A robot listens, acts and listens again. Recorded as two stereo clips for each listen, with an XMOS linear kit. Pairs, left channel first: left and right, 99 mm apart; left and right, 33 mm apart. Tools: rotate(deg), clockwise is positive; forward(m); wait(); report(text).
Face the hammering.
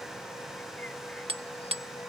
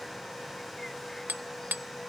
rotate(75)
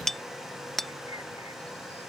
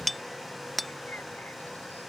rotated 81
report("Found it: hammering, straight ahead.")